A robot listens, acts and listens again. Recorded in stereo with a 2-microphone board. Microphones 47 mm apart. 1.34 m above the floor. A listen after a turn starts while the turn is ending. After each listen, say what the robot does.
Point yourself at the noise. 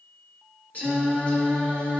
Turn 30° left.
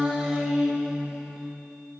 Found it: singing, straight ahead.